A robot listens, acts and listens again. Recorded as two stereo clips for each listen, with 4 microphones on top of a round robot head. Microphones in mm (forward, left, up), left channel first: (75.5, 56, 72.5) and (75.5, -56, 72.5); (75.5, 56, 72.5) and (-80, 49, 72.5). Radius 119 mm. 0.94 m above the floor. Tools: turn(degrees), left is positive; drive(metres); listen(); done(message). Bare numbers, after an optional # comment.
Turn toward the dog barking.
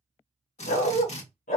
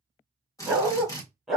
# The dog barking: 95° left.
turn(95)
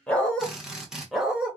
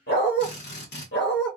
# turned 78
# The dog barking is now 10° right.
turn(-10)
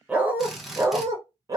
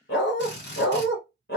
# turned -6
# The dog barking is now 40° right.
turn(-40)
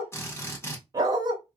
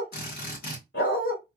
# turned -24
# The dog barking is now 40° right.
turn(-40)
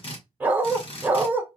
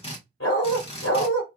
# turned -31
# The dog barking is now 15° right.
turn(-15)
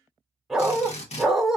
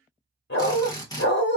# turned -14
done("Found it: a dog barking, straight ahead, 1 to 2 m away.")